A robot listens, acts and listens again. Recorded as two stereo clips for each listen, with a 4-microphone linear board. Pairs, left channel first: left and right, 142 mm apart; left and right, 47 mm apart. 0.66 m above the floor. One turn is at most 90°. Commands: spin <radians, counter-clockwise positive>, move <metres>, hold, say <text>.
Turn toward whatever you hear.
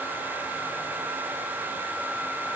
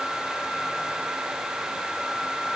hold
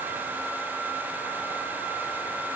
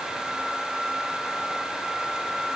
hold
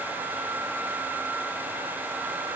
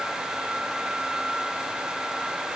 say I can't make out anything.